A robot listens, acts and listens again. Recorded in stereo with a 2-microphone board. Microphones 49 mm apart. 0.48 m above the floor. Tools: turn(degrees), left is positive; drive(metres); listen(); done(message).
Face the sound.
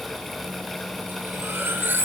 turn(degrees=-50)
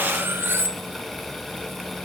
turn(degrees=-70)
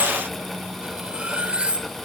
turn(degrees=-30)
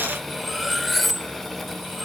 done("Found it: cutlery clinking, straight ahead.")